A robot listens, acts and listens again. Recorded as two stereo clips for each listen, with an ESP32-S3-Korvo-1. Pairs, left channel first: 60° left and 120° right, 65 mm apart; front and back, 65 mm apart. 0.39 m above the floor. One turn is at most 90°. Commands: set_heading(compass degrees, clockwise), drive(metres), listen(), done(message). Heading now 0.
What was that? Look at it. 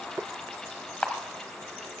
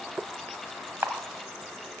set_heading(270)
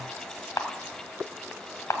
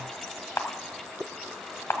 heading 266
set_heading(226)
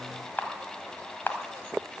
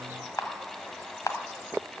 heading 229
done("Facing the camera shutter.")